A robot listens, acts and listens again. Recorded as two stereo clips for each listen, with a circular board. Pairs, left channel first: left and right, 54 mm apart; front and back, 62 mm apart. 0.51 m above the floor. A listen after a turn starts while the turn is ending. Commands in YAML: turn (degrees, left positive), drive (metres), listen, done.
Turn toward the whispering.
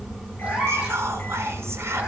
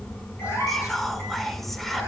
turn: -85
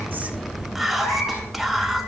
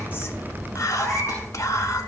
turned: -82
done: "Facing the whispering, 1 to 2 m away."